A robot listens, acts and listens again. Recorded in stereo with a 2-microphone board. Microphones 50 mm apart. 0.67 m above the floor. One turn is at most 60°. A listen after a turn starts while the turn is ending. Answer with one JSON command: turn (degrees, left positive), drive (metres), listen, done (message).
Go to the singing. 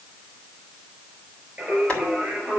{"turn": -25}
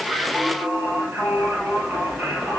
{"turn": -60}
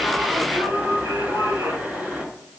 {"turn": -60}
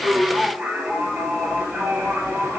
{"turn": -35}
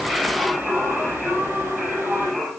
{"turn": -10}
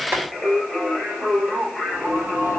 {"drive": 1.0}
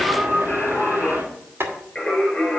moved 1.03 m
{"drive": 1.0}
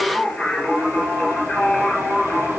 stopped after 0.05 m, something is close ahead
{"turn": 10}
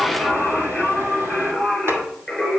{"done": "Blocked. The singing is further on, straight ahead."}